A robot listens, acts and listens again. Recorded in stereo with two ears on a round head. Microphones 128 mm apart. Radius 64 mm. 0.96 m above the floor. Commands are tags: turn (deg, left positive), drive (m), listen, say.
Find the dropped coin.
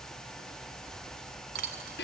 <turn deg="-75"/>
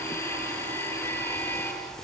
<listen/>
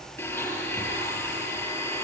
<say>I heard a dropped coin, but can't make it out now. It was about straight ahead or 30° right.</say>